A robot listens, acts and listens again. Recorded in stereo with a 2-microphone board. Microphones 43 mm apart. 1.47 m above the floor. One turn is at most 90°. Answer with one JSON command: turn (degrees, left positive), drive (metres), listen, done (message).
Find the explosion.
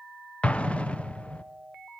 {"turn": 25}
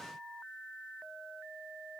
{"listen": true}
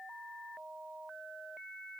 {"done": "I heard an explosion, but can't make it out now. It was about straight ahead or 130° left."}